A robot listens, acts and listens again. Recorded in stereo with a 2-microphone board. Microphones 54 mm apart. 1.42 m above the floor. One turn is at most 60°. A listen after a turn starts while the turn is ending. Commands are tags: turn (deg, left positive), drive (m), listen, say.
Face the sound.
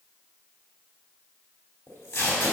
<turn deg="60"/>
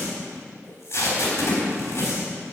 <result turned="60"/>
<turn deg="50"/>
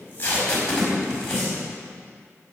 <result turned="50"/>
<turn deg="15"/>
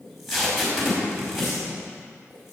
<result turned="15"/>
<say>Facing the tape being pulled.</say>